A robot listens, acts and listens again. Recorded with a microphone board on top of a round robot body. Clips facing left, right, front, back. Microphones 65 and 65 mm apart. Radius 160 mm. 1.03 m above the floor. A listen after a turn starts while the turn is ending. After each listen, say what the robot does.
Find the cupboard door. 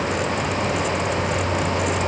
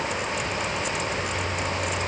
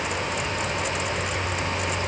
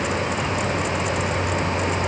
Keep listening.
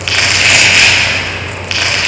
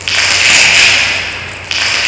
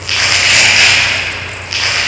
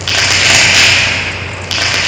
Keep listening.
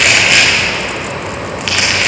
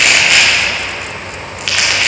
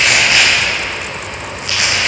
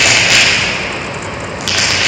I can't make out a cupboard door to turn to.